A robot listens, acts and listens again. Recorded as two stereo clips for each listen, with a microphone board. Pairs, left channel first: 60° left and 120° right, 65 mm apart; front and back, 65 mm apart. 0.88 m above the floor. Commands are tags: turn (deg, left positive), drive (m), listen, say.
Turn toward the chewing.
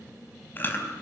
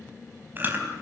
<turn deg="120"/>
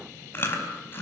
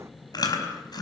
<say>Facing the chewing.</say>